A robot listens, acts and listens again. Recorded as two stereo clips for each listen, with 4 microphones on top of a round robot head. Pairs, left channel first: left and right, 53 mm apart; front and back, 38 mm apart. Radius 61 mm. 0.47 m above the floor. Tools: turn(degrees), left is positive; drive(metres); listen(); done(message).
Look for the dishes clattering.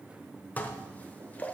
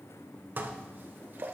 turn(degrees=150)
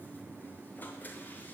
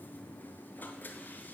listen()
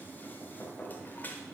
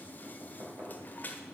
turn(degrees=35)
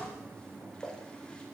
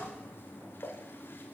turn(degrees=15)
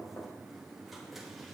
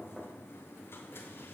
listen()
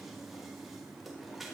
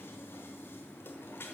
listen()
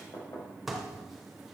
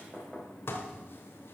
done("Facing the dishes clattering, 1 to 2 m away.")